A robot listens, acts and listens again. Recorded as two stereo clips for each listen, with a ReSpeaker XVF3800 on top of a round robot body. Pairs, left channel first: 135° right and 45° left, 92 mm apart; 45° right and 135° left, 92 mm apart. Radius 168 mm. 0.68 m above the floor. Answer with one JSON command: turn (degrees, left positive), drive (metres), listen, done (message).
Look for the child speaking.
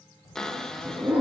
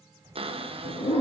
{"turn": -170}
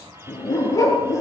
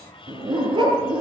{"listen": true}
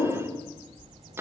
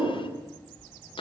{"turn": 30}
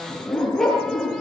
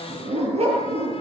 {"listen": true}
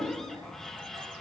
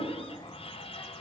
{"listen": true}
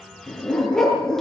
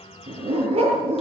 {"done": "Facing where the child speaking came from. I can't hear it now."}